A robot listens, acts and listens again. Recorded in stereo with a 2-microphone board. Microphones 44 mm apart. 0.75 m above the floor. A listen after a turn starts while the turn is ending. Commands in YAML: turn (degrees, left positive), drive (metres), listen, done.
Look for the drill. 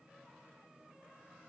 listen: true
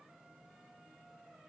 listen: true
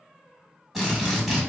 turn: 30
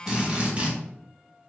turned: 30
turn: -30
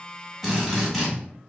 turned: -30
done: "Found it: a drill, straight ahead, 1 to 2 m away."